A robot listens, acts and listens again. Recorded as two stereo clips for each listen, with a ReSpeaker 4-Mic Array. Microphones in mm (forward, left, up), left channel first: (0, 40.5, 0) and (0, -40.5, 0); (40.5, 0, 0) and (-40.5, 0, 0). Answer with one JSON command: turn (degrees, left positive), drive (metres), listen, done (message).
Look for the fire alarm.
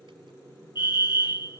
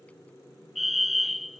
{"turn": 90}
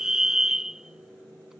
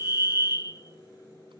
{"turn": -10}
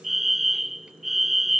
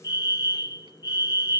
{"done": "Found it: a fire alarm, straight ahead."}